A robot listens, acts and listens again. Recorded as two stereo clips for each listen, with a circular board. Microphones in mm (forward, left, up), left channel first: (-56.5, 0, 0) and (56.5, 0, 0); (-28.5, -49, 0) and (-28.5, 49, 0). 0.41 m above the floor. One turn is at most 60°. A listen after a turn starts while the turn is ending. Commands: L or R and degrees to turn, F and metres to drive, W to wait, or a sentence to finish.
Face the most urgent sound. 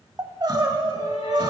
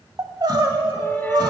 L50
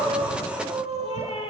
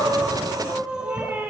L10
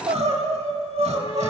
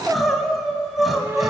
Facing the crying.